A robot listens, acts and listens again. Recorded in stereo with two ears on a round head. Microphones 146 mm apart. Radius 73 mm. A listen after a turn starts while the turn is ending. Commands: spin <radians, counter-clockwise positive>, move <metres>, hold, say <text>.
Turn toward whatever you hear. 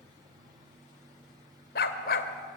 spin 1.05
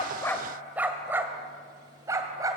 spin -0.35
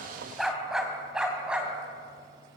say Found it: a dog barking, straight ahead.